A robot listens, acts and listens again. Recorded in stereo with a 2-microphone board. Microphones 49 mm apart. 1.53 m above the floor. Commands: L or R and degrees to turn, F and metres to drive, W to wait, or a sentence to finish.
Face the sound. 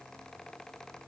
W
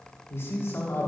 L60
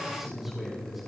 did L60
R10
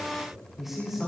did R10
R10
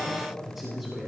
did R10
R10
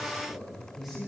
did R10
R10
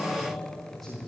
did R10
Facing the man speaking, 2 to 4 m away.